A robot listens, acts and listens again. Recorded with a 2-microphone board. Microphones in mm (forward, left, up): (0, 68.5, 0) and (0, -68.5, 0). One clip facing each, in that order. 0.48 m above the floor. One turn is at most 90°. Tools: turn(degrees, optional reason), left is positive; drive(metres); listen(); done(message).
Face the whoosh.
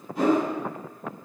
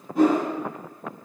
turn(degrees=-45, reason="The whoosh: about 45° right or 135° right.")
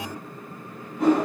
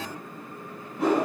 done("Found it: a whoosh, straight ahead.")